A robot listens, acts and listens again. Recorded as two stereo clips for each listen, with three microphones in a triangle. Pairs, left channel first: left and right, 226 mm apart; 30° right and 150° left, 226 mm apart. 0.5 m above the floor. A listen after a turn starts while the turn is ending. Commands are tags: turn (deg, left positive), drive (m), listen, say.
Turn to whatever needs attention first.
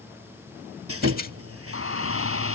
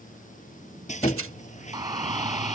<turn deg="80"/>
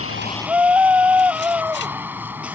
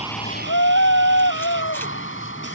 <turn deg="-10"/>
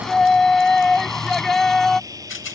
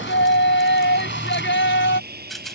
<say>Facing the shout.</say>